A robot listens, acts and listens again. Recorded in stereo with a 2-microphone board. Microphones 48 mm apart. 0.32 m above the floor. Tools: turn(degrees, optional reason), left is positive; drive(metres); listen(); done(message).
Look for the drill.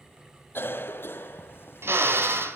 turn(degrees=-60, reason="The drill: about 60° right or 120° right.")
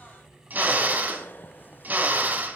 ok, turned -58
turn(degrees=-45, reason="So it is at 45° right.")
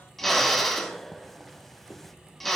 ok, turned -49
done("Facing the drill.")